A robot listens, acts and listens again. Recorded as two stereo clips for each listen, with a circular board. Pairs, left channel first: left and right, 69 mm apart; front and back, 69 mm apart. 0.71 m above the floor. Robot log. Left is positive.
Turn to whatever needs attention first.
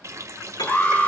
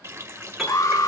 note: The alarm: 25° left.
cmd yaw +25
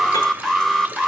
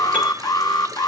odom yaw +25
end: Facing the alarm, 1 to 2 m away.